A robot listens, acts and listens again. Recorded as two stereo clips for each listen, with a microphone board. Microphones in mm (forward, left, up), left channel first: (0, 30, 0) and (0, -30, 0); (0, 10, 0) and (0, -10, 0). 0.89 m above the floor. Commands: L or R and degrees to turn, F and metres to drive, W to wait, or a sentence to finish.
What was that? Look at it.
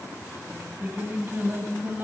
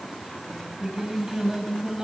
R35
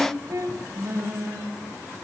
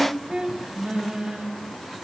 R95
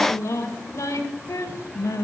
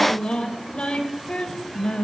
L75
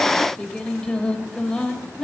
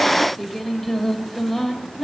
L10
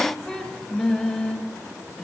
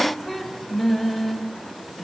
Found it: singing, straight ahead, 2 to 4 m away.